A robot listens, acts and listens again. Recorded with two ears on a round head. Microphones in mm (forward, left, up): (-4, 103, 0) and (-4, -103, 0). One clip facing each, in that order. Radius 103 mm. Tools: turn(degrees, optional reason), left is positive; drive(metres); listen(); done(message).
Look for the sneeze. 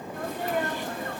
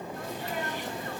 turn(degrees=50, reason="The sneeze: about 50° left or 130° left.")
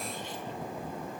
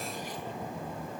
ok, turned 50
listen()
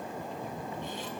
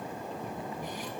done("I heard a sneeze, but can't make it out now. It was about straight ahead or 80° left.")